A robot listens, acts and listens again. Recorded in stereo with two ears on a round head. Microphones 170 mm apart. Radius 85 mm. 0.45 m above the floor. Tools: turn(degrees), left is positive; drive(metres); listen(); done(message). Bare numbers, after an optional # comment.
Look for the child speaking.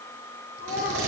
# The child speaking: about 50° left or 130° left.
turn(50)
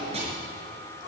listen()
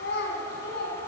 # So it is at 60° left.
turn(60)
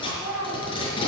# The child speaking is now 10° right.
turn(-10)
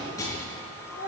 # The child speaking is now 10° right.
turn(-10)
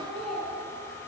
done("Facing the child speaking.")